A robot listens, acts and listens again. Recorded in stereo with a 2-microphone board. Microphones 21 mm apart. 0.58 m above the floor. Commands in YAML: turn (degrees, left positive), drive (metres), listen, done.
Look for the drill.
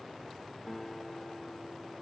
listen: true
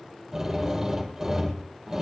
turn: -30
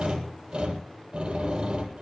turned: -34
turn: -135
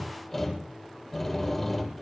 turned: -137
done: "Facing the drill."